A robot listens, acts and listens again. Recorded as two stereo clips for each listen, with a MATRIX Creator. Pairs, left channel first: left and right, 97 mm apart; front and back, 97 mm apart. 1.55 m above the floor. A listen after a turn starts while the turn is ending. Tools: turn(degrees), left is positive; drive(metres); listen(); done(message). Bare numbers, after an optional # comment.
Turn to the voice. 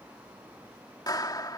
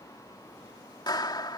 listen()
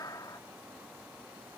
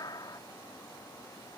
listen()
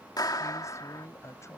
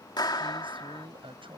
# The man speaking: 150° left.
turn(150)
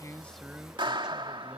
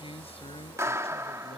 listen()
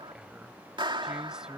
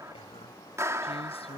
# The man speaking is now 10° right.
turn(-10)
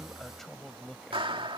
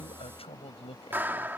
done("Facing the man speaking.")